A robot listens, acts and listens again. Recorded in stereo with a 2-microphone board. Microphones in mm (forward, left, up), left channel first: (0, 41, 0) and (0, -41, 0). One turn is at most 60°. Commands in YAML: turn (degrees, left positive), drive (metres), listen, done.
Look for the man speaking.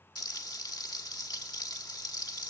listen: true
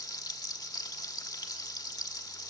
listen: true
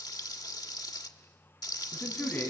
turn: 20
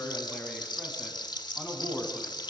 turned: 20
turn: 30
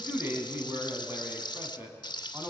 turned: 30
turn: -30
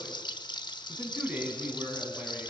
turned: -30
turn: -20
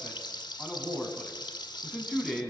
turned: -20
done: "Facing the man speaking, over 4 m away."